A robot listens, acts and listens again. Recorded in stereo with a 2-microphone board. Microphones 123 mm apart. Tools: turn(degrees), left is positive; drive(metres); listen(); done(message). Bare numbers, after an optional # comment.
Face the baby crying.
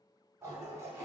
listen()
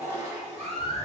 # The baby crying: about 65° right or 115° right.
turn(-65)
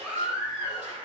# So it is at 10° right.
turn(-10)
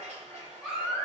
done("Found it: a baby crying, straight ahead.")